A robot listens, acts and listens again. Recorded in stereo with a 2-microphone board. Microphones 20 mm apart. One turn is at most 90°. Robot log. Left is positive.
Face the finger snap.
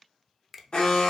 cmd yaw +30
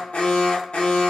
cmd idle
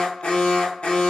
cmd idle
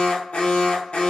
end: I heard a finger snap, but can't make it out now. It was about 30° right or 150° left.